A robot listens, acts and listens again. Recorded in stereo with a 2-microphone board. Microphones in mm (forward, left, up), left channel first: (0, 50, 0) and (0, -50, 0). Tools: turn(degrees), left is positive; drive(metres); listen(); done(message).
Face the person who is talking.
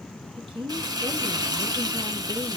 turn(degrees=-60)
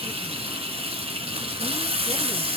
listen()
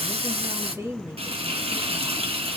turn(degrees=-35)
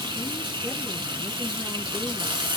listen()
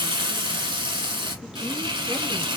listen()
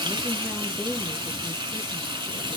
done("Facing where the woman speaking came from. I can't hear it now.")